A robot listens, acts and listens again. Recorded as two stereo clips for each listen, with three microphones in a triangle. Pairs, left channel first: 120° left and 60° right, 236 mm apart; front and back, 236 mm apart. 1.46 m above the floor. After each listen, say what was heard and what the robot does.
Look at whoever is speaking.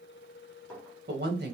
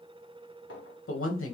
The woman speaking: 20° right. Turn 20° right.
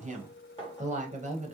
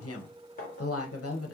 Facing the woman speaking.